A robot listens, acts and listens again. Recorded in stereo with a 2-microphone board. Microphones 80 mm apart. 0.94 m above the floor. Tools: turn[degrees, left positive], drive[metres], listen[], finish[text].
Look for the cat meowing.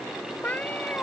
Thought: The cat meowing: about 25° left or 155° left.
Action: turn[25]
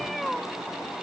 Action: finish[Facing the cat meowing.]